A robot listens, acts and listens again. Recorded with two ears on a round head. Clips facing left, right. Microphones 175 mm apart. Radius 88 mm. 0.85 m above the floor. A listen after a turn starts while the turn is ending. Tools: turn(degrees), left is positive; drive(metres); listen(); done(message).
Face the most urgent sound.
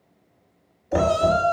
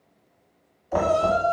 turn(degrees=40)
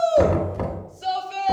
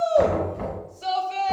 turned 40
done("Facing the shout, under 1 m away.")